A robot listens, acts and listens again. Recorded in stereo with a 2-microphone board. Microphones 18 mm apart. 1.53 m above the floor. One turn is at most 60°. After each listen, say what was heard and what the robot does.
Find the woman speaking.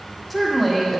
Turn 30° left.
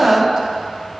So it is at 30° right. Turn 30° right.
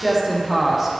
The woman speaking is now 15° right. Turn 15° right.
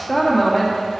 Facing the woman speaking, 1 to 2 m away.